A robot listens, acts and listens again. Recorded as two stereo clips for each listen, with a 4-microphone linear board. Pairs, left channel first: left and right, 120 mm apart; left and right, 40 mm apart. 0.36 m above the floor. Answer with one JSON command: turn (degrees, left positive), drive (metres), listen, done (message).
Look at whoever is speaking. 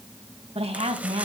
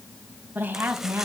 {"turn": -55}
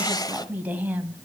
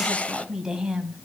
{"turn": -15}
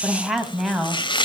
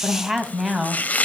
{"done": "Found it: a woman speaking, straight ahead, 2 to 4 m away."}